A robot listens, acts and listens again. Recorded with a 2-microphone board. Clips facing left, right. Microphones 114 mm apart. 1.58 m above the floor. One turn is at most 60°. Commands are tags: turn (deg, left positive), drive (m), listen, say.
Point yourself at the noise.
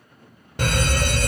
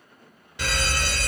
<turn deg="50"/>
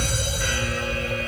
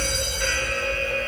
<turn deg="15"/>
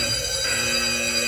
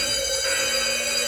<say>Facing the fire alarm.</say>